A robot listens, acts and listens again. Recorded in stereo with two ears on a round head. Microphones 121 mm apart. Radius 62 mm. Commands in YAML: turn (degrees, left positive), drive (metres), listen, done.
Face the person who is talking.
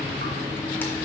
listen: true
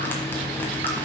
listen: true
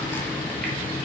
done: "I can't make out anyone speaking."